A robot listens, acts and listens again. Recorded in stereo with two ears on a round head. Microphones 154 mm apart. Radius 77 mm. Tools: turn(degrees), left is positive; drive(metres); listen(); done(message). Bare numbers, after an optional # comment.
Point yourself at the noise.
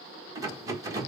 # The rattle: about 20° right or 160° right.
turn(-20)
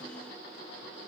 listen()
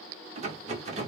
# So it is at 140° right.
turn(-140)
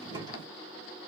# The rattle is now 25° right.
turn(-25)
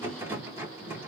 # The rattle is now 15° right.
turn(-15)
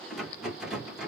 done("Found it: a rattle, straight ahead, 1 to 2 m away.")